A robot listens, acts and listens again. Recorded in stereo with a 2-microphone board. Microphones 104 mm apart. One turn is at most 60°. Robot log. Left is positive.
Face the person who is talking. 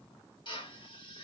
cmd idle
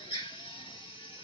cmd idle
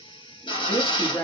note: The woman speaking: about 20° left or 160° left.
cmd yaw +20
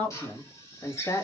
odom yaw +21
note: The woman speaking: about 30° left or 150° left.
cmd yaw +30
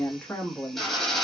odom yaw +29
note: The woman speaking: about 25° left or 155° left.
cmd yaw +25
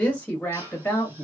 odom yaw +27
note: The woman speaking: about 15° left or 165° left.
cmd yaw +15
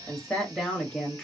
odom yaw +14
cmd yaw +30
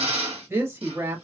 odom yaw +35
note: So it is at 25° right.
cmd yaw -25
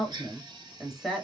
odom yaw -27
end: Facing the woman speaking, 1 to 2 m away.